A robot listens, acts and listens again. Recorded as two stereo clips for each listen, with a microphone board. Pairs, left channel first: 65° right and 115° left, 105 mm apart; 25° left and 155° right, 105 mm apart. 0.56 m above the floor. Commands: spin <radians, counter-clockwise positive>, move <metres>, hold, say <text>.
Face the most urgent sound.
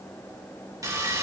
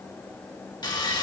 hold
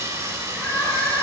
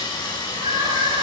spin -2.36
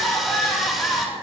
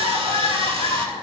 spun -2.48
say Facing the crying.